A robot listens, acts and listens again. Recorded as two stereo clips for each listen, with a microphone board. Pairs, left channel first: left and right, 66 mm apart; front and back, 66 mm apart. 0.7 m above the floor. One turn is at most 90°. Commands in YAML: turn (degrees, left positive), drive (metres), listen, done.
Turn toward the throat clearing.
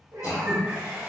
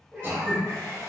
turn: 90
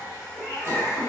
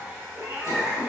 turn: 35
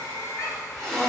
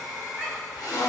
done: "Found it: throat clearing, straight ahead."